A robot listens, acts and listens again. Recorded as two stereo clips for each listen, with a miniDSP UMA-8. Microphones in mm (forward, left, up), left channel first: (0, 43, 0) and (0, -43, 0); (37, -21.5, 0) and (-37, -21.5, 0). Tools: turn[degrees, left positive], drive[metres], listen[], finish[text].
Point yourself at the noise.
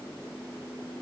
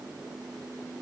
Action: listen[]
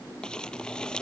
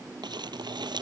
Thought: The crumpling: 170° left.
Action: turn[170]
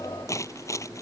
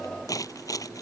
Thought: The crumpling is now 40° left.
Action: turn[40]
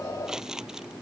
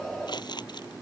Action: finish[Found it: crumpling, straight ahead.]